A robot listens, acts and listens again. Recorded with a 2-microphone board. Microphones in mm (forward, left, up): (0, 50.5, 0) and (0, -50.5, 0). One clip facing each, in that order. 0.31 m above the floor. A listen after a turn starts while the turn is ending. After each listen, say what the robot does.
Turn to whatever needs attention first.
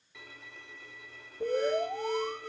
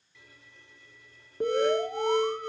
Turn 90° right.
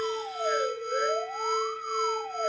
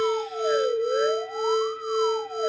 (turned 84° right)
Found it: an alarm, straight ahead.